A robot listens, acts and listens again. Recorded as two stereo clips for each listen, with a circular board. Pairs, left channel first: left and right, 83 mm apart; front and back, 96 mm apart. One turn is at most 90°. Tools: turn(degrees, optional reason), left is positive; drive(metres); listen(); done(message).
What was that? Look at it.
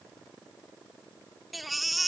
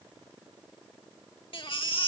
done("Found it: a baby crying, straight ahead.")